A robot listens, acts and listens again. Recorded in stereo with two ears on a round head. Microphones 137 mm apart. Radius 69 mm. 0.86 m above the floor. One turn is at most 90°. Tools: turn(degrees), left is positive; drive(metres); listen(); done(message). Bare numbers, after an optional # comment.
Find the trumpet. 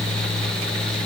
listen()
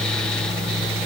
listen()
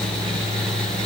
done("I can't make out a trumpet to turn to.")